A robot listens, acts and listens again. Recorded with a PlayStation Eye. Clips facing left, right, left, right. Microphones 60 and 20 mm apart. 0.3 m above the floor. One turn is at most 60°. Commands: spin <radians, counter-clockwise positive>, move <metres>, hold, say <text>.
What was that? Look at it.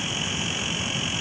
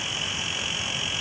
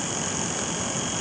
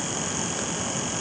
hold
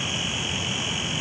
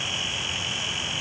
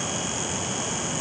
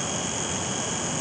hold
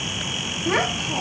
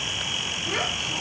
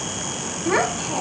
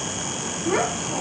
spin 0.87
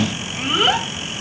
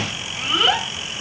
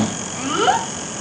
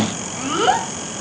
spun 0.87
say Found it: a child speaking, straight ahead.